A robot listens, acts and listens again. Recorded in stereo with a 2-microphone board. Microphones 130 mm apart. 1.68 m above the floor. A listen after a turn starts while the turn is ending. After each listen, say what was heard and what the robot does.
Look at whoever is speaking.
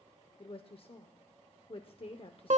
The woman speaking: about 50° left or 130° left. Turn 50° left.
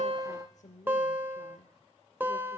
So it is at 80° left. Turn 80° left.
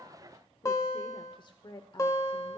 The woman speaking is now 40° left. Turn 40° left.
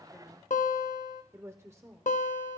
The woman speaking is now 20° right. Turn 20° right.
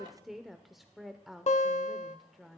Facing the woman speaking, under 1 m away.